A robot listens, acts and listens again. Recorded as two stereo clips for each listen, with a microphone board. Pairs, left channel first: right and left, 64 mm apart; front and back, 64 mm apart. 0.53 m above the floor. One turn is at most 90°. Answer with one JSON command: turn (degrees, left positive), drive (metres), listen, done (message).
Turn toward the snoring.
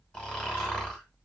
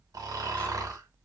{"turn": -90}
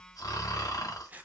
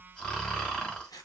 {"turn": -70}
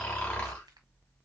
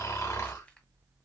{"turn": -25}
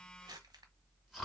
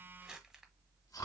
{"done": "Facing the snoring, 1 to 2 m away."}